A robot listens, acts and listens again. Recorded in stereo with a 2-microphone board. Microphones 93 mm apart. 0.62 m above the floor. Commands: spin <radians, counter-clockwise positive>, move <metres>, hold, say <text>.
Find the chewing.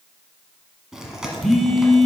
spin -0.52
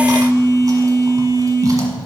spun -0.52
hold
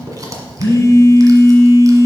spin -2.44
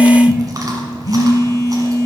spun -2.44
hold
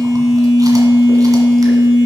hold
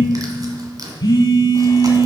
spin -0.70
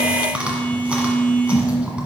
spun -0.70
spin -0.26
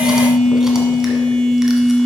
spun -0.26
hold
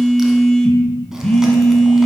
hold
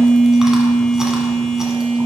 say I heard chewing from this way, but can't make it out now.